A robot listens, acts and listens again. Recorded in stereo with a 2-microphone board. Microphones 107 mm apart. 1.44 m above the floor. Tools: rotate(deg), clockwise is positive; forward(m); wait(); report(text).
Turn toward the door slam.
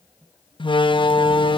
rotate(-50)
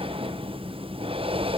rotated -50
wait()
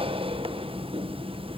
report("I heard a door slam, but can't make it out now. It was about straight ahead or 80° left.")